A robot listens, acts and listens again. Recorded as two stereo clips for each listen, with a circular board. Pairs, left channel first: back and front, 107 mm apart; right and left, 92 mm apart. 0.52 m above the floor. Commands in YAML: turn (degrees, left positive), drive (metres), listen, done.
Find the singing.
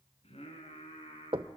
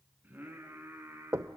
turn: 155
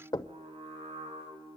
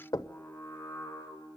turn: -25
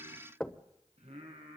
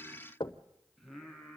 done: "Found it: singing, straight ahead, over 4 m away."